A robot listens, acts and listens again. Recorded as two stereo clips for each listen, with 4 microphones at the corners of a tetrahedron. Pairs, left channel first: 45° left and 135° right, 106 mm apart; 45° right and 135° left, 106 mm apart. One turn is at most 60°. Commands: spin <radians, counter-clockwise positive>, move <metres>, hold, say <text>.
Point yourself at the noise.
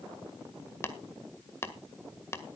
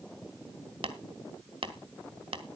spin 1.05
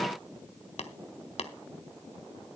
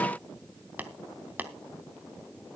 spin 1.05
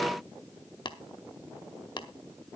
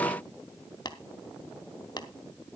say Facing the tapping, 1 to 2 m away.